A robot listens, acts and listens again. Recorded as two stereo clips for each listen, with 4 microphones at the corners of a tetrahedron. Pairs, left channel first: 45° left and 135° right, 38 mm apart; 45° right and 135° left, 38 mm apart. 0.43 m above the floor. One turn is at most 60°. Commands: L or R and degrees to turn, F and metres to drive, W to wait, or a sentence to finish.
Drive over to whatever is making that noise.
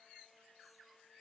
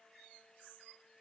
W
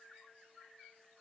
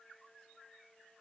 W
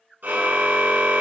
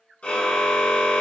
R60
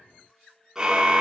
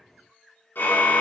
R60
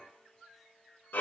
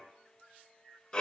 L25
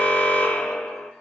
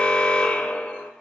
F1.0
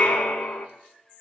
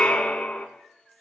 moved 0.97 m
L10
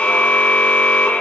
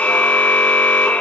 F1.0
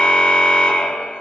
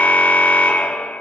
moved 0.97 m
F1.0
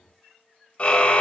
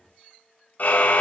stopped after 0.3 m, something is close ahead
Arrived at the car horn, straight ahead.